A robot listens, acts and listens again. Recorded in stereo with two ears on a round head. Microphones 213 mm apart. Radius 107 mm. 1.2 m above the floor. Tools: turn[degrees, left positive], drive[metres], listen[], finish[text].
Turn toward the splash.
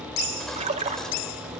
Thought: The splash: about 30° right or 150° right.
Action: turn[-30]
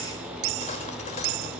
Action: listen[]
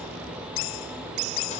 Action: finish[I heard a splash, but can't make it out now. It was about straight ahead or 120° right.]